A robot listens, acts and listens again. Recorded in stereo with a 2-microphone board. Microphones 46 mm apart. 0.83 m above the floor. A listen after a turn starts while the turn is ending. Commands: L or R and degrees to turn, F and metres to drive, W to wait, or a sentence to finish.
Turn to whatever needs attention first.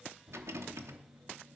W
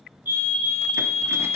R55
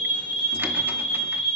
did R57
Found it: a fire alarm, straight ahead.